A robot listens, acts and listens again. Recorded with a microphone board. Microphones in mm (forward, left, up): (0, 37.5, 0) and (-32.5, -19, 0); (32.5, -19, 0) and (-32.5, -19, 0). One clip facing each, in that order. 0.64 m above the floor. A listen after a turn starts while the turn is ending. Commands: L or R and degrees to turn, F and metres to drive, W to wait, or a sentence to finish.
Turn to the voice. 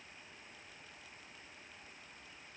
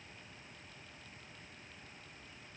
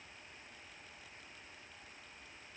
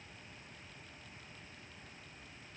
W
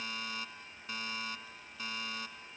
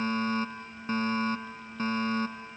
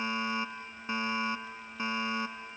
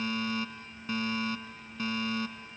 W
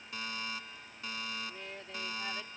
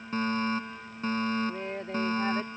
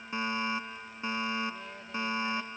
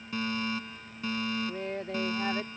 R165
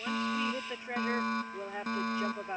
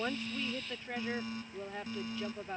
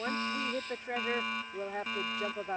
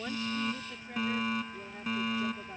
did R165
R10
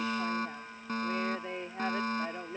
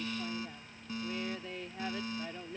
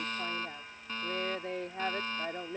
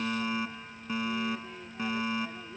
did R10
Facing the woman speaking.